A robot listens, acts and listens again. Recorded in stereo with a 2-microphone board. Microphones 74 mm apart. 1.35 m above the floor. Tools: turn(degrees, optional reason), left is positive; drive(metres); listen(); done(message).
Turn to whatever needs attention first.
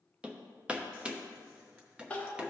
turn(degrees=15, reason="The crying: about 15° left or 165° left.")
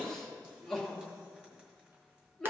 done("Facing the crying.")